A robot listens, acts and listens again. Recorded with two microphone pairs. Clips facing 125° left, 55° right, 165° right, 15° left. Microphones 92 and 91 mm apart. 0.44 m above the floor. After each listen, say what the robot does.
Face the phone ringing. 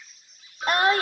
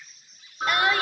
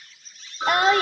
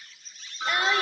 Turn 105° right.
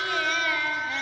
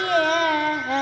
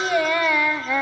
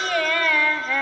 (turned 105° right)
Keep listening.
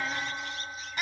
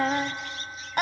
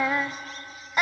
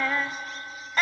Keep listening.
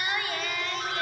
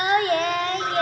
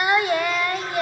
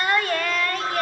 Facing where the phone ringing came from. I can't hear it now.